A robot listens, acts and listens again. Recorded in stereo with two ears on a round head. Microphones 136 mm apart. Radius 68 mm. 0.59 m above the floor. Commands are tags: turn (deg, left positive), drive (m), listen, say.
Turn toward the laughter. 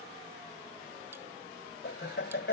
<turn deg="90"/>
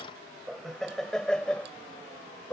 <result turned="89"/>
<turn deg="15"/>
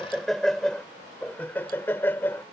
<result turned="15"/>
<turn deg="15"/>
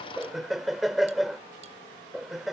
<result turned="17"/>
<say>Facing the laughter.</say>